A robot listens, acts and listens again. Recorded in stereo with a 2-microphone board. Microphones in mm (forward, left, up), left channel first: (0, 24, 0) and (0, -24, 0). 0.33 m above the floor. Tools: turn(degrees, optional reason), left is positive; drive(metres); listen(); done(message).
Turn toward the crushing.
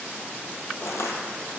turn(degrees=70, reason="The crushing: about 70° left or 110° left.")
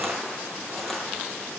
done("Facing the crushing, 1 to 2 m away.")